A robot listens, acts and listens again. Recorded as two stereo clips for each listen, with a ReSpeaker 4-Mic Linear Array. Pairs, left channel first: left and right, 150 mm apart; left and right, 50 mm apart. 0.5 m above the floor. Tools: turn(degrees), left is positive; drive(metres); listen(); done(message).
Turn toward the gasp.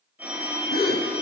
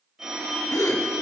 turn(degrees=90)
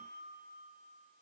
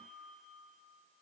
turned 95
done("I heard a gasp from this way, but can't make it out now.")